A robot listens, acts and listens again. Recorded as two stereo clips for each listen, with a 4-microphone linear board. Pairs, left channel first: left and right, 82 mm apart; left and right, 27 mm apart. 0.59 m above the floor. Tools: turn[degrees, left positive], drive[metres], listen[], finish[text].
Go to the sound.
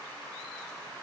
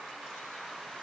Action: listen[]
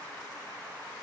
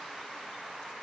Action: listen[]
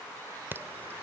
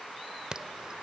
Thought: The alarm: about 25° right or 155° right.
Action: turn[-25]
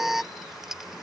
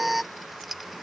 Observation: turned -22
Action: drive[1.0]
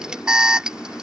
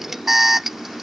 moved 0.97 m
Thought: The alarm is now 15° right.
Action: turn[-15]
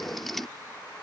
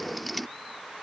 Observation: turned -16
Action: drive[1.0]
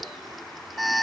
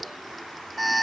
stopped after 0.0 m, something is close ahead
Action: finish[Arrived at the alarm, straight ahead.]